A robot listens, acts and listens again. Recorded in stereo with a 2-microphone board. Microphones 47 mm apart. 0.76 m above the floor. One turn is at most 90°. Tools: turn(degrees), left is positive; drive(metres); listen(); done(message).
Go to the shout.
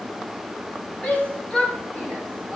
turn(degrees=30)
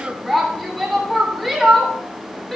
drive(metres=1.0)
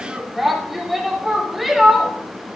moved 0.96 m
drive(metres=1.0)
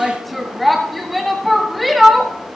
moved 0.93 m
drive(metres=1.0)
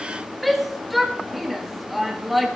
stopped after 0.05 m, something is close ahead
done("I am next to the shout.")